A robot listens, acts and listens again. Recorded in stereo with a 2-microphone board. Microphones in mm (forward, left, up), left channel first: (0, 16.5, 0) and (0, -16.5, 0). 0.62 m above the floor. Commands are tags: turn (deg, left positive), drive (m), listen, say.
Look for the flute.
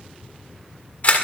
<listen/>
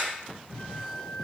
<turn deg="-30"/>
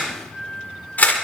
<turn deg="30"/>
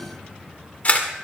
<listen/>
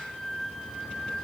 <say>Found it: a flute, straight ahead, over 4 m away.</say>